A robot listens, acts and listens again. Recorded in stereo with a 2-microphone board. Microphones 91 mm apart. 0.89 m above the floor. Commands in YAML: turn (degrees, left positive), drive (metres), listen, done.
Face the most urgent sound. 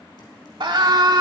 turn: -60
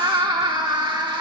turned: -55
turn: -60
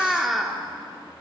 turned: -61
done: "Found it: a scream, straight ahead."